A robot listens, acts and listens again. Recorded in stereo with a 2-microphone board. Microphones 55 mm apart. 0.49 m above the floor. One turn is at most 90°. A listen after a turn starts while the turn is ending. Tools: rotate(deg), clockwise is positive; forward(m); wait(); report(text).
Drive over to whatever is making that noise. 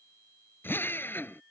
rotate(-40)
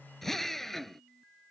forward(1.0)
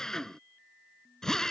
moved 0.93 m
rotate(-10)
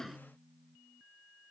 wait()
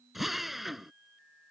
forward(1.0)
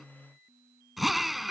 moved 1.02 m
forward(1.0)
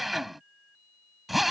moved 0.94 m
forward(1.0)
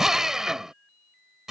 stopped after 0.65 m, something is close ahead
rotate(10)
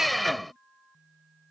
report("I am next to the drill.")